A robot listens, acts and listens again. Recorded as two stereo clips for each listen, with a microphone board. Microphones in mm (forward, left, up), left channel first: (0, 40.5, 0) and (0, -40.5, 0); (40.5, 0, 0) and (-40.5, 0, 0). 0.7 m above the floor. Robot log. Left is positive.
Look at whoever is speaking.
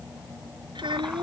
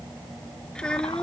note: The child speaking: 80° right.
cmd yaw -80
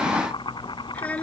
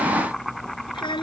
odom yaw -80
note: The child speaking is now 15° left.
cmd yaw +15
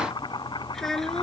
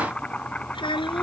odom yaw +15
end: Facing the child speaking.